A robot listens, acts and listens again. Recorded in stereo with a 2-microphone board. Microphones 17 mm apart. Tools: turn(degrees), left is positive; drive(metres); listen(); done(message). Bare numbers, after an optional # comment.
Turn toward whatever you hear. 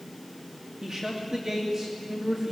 # The man speaking: about 35° right or 145° right.
turn(-35)
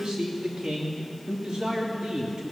# So it is at 105° right.
turn(-105)
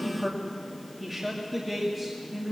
# The man speaking is now 20° right.
turn(-20)
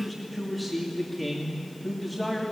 # The man speaking is now 10° right.
turn(-10)
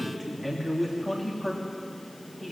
done("Found it: a man speaking, straight ahead.")